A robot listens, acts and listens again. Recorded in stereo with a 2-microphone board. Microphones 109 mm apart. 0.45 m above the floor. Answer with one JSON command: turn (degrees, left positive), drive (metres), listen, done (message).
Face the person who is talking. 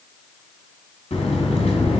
{"listen": true}
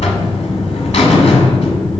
{"listen": true}
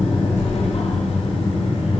{"done": "I can't make out anyone speaking, only a buzzer."}